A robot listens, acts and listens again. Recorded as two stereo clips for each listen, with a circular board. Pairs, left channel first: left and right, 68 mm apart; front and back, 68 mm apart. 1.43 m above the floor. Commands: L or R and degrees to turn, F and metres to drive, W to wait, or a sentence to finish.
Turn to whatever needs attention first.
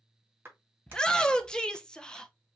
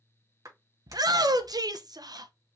L170
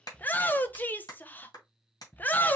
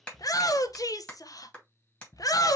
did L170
L25
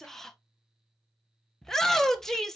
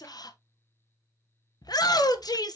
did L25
Found it: a shout, straight ahead.